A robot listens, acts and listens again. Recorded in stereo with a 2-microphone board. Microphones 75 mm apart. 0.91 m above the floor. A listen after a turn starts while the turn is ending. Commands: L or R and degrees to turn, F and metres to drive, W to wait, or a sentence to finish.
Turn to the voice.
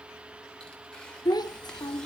L65
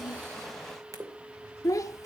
L50
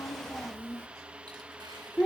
L15
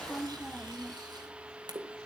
L10
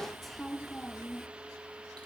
Found it: a child speaking, straight ahead, under 1 m away.